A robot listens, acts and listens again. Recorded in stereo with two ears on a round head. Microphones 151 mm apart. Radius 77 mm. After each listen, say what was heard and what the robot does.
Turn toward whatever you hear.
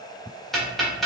Turn 30° left.
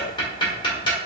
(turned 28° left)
So it is at 150° left. Turn 150° left.
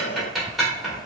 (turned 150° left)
Found it: ticking, straight ahead.